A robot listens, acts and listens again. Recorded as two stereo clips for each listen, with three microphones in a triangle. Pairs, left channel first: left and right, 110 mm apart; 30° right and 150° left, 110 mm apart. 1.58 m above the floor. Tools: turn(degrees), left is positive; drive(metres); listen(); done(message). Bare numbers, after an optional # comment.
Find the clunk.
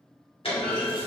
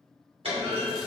# The clunk: 120° left.
turn(120)
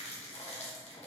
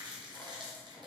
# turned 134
# Nothing new. It was at 15° right.
turn(-15)
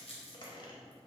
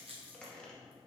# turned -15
done("Facing where the clunk came from. I can't hear it now.")